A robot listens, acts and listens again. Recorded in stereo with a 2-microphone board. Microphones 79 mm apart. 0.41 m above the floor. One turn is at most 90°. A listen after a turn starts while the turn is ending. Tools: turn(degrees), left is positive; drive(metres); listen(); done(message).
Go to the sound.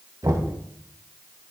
turn(degrees=-55)
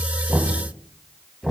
drive(metres=1.0)
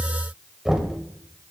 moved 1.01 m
turn(degrees=-10)
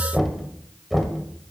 drive(metres=1.0)
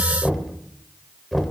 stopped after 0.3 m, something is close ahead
done("I am next to the knocking.")